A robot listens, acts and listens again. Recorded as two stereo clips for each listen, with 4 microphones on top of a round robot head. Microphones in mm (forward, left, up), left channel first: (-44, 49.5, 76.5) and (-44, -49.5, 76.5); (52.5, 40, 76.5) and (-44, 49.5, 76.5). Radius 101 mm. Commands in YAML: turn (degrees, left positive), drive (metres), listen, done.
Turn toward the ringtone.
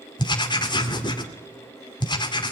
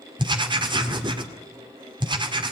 listen: true
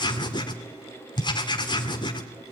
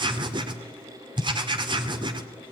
listen: true
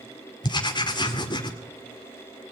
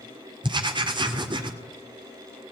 done: "I can't make out a ringtone to turn to."